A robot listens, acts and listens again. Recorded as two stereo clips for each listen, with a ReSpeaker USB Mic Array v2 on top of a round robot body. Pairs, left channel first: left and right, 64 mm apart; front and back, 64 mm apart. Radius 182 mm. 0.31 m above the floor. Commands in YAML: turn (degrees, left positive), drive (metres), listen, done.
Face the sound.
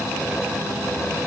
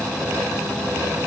listen: true
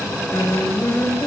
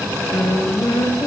turn: 45
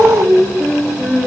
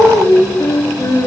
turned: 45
turn: -10
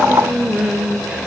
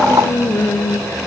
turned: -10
turn: -10
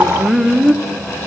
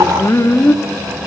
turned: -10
turn: -10
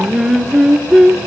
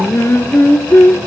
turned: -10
turn: -10
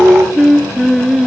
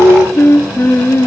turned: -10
done: "Found it: singing, straight ahead."